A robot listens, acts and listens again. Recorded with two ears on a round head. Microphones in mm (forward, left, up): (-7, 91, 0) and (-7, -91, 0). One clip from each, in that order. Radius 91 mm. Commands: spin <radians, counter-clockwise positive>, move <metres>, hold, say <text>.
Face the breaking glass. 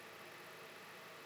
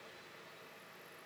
hold
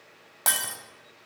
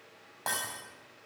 spin 1.05
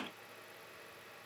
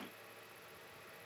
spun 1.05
hold
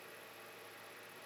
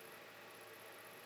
say I heard breaking glass, but can't make it out now. It was about straight ahead or 60° left.